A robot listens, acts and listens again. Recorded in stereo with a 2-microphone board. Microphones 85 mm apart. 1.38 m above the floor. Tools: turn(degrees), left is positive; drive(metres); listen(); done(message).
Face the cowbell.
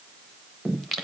listen()
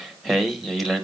listen()
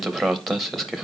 done("I can't make out a cowbell to turn to.")